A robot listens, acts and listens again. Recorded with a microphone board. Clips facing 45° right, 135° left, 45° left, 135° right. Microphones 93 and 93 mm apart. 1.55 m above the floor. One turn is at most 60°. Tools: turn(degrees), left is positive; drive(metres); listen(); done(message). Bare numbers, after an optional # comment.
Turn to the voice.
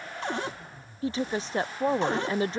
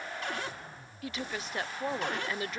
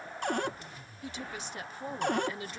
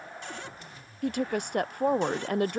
# The woman speaking: 105° right.
turn(-60)
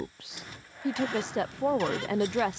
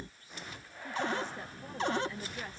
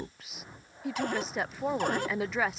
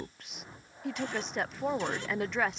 # The woman speaking is now 45° right.
turn(-45)
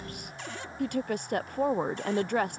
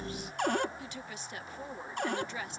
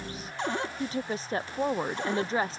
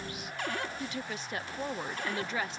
# The woman speaking is now 10° right.
turn(-10)
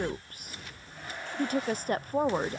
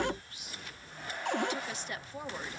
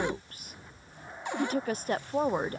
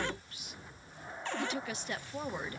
done("Facing the woman speaking.")